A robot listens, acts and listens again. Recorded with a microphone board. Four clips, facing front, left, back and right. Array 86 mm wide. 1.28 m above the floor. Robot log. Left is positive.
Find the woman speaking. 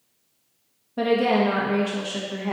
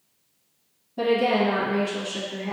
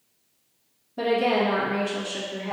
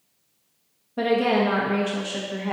note: The woman speaking: 50° right.
cmd yaw -50
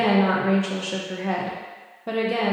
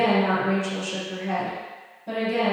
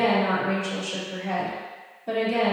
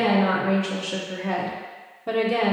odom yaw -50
note: The woman speaking is now 45° right.
cmd yaw -45
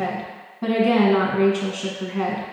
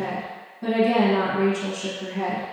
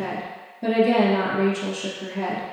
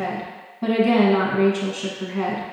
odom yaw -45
note: The woman speaking is now 25° right.
cmd yaw -25
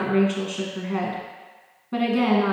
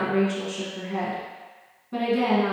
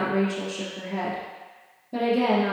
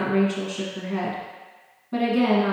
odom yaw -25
end: Found it: a woman speaking, straight ahead, 1 to 2 m away.